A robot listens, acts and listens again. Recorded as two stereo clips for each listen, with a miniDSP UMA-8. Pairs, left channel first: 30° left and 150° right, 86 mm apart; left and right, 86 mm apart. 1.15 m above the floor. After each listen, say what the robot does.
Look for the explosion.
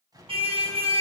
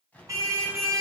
Turn 165° left.
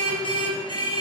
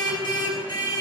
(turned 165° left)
I heard an explosion from this way, but can't make it out now.